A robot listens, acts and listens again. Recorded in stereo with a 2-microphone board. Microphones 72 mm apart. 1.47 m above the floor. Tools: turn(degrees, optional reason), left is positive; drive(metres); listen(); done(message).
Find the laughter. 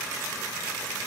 listen()
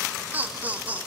turn(degrees=-20, reason="The laughter: about 20° right or 160° right.")
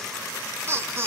turn(degrees=-35, reason="The laughter: about 35° right or 145° right.")
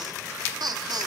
turn(degrees=-115, reason="So it is at 115° right.")
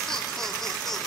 done("Found it: laughter, straight ahead.")